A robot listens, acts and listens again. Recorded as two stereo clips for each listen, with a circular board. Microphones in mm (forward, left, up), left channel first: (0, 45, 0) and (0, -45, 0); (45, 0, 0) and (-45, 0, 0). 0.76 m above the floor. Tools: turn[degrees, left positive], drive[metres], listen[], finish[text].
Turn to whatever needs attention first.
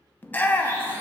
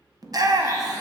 Thought: The shout: 155° left.
Action: turn[155]
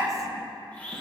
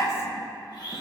Thought: The shout is now 50° right.
Action: turn[-50]
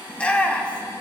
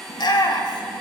Thought: The shout is now 15° left.
Action: turn[15]
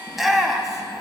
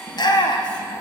Action: finish[Found it: a shout, straight ahead, under 1 m away.]